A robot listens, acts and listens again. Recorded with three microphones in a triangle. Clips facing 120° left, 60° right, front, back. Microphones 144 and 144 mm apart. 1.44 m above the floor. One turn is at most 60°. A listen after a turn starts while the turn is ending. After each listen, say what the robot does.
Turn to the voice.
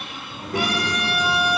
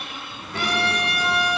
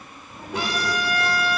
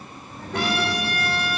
Turn 60° left.
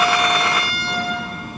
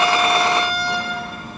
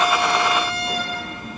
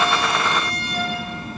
Turn 25° left.
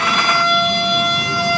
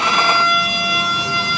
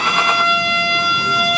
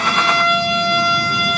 Keep listening.
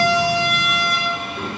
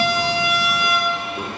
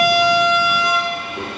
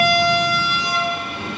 Turn 15° left.
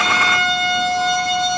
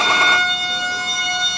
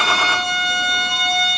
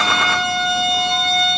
Keep listening.
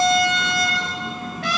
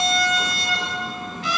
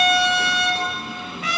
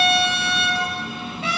Facing the child speaking.